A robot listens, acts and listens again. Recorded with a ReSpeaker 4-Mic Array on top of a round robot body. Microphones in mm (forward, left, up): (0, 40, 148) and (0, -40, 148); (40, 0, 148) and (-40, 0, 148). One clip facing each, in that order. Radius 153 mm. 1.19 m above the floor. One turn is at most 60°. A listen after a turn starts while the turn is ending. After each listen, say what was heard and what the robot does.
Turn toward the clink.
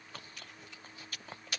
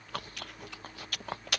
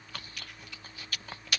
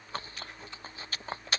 Keep listening.
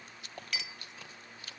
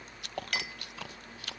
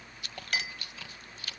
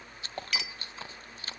The clink: 50° right. Turn 50° right.
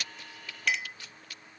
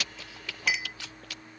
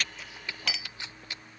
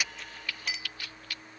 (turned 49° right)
Facing the clink.